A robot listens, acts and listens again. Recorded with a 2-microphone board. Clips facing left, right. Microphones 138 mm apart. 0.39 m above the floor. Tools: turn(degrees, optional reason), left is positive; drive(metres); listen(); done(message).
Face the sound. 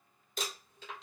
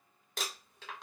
turn(degrees=-90)
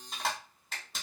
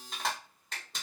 done("Facing the crumpling.")